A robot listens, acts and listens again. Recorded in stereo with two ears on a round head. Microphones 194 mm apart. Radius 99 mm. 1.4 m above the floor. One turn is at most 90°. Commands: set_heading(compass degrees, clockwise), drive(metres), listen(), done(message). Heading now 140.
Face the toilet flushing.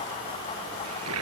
set_heading(230)
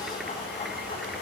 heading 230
listen()
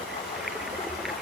done("Found it: a toilet flushing, straight ahead.")